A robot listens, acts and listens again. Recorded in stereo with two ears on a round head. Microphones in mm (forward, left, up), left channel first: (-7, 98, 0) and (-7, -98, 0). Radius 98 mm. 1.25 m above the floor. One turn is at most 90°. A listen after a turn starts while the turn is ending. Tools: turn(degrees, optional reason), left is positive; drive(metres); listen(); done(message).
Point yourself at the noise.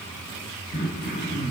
turn(degrees=50, reason="The throat clearing: about 50° left or 130° left.")
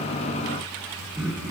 done("Facing the throat clearing.")